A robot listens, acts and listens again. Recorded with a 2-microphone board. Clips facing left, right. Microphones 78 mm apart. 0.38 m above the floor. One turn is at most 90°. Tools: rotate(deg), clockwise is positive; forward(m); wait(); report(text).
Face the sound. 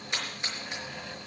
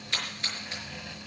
rotate(-20)
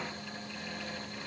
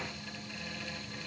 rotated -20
wait()
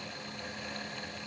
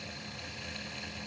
report("I heard a splash, but can't make it out now. It was about straight ahead or 140° left.")